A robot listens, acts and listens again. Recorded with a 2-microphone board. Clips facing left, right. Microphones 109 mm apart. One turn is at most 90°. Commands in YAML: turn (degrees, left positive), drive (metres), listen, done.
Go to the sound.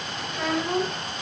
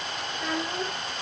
turn: 90
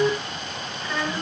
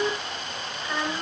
turn: -10
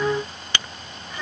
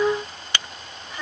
drive: 1.0
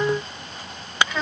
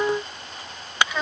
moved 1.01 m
drive: 1.0
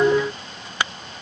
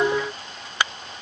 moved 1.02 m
listen: true
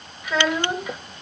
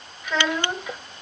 drive: 1.0
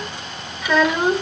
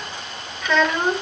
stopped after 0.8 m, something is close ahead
done: "I am next to the child speaking."